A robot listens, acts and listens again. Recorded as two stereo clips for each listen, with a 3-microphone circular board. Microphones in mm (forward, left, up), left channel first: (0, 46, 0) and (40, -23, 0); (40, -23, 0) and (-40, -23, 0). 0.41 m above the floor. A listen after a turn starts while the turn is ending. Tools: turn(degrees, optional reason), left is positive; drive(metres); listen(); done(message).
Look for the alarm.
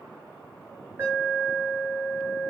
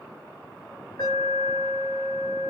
done("Found it: an alarm, straight ahead, 2 to 4 m away.")